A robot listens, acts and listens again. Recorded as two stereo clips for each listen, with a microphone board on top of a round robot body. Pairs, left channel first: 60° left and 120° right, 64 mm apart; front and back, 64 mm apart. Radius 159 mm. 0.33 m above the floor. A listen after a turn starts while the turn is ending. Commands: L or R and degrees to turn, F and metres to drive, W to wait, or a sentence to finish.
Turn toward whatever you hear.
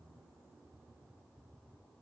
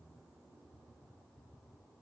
W
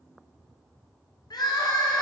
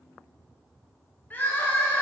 L65
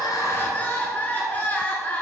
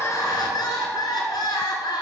Found it: crying, straight ahead.